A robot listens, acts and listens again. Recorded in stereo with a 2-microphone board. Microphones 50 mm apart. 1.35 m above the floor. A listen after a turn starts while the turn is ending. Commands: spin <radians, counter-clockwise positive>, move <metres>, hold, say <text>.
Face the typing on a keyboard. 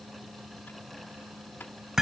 hold
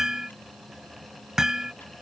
hold
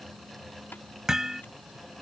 say I can't make out typing on a keyboard to turn to.